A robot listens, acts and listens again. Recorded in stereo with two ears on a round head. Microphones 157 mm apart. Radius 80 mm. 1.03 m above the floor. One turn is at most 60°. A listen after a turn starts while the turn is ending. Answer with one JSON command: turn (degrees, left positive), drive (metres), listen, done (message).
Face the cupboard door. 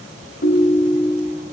{"listen": true}
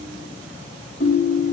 {"listen": true}
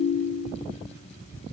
{"done": "I can't make out a cupboard door, only a ringtone."}